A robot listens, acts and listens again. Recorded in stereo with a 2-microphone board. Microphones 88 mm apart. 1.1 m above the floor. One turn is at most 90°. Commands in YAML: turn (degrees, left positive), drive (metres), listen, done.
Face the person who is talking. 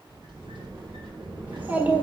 turn: -20
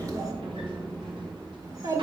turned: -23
turn: -90
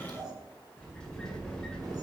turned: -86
turn: -50
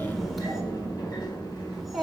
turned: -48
done: "Found it: a child speaking, straight ahead."